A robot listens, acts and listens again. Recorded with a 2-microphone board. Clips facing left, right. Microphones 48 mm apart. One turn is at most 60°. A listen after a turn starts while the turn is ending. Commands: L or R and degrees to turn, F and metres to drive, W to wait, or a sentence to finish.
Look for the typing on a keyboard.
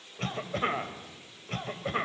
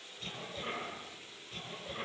W
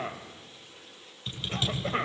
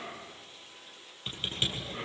R30
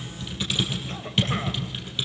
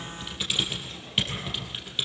Facing the typing on a keyboard.